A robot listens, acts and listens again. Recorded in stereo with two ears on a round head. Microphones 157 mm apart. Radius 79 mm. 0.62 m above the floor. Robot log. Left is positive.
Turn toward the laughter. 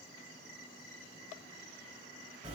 cmd idle
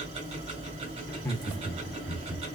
cmd yaw -30
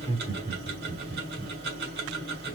note: So it is at 125° right.
cmd yaw -125
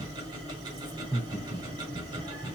note: The laughter is now 20° right.
cmd yaw -20
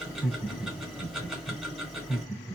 end: Facing the laughter, 1 to 2 m away.